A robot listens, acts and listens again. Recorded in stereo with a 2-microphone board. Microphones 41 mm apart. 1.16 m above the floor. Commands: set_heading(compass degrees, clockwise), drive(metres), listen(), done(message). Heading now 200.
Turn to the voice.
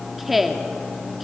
set_heading(170)
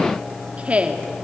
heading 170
set_heading(200)
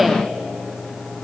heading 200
listen()
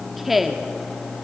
done("Facing the woman speaking, 2 to 4 m away.")